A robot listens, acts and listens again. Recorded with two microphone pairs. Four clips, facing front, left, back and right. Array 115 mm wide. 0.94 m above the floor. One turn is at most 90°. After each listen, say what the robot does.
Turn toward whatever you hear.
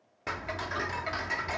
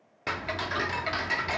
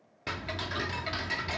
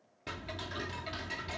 Turn 75° left.
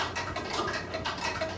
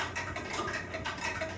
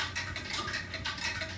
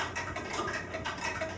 Found it: ticking, straight ahead.